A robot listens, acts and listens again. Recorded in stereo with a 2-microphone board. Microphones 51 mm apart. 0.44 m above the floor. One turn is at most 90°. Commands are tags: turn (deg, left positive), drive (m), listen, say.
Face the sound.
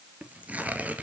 <turn deg="-30"/>
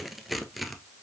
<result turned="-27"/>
<say>Found it: tearing paper, straight ahead, 1 to 2 m away.</say>